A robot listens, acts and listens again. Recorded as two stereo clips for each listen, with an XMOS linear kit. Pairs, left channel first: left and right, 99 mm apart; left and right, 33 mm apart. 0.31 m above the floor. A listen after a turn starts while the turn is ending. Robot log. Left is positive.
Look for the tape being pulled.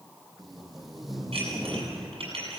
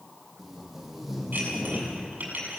cmd yaw +30
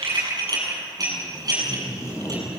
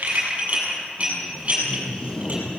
note: So it is at 150° left.
cmd yaw +150
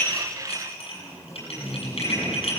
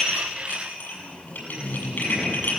note: The tape being pulled is now 30° left.
cmd yaw +30
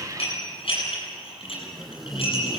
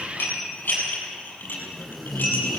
end: Facing the tape being pulled, 2 to 4 m away.